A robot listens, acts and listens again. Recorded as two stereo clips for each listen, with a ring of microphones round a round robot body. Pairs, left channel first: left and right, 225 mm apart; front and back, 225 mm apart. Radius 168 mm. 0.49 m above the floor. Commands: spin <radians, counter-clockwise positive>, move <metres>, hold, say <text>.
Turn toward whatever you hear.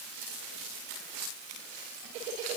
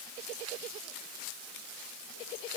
hold
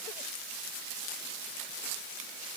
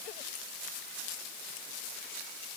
hold
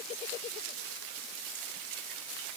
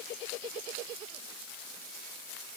say I can't make out anything to turn to.